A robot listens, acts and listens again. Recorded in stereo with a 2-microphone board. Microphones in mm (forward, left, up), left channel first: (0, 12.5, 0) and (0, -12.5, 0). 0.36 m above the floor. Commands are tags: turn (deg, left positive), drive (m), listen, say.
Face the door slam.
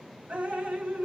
<listen/>
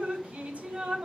<listen/>
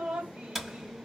<turn deg="30"/>
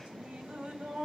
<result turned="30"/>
<listen/>
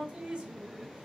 <say>I heard a door slam, but can't make it out now. It was about 30° right or 150° left.</say>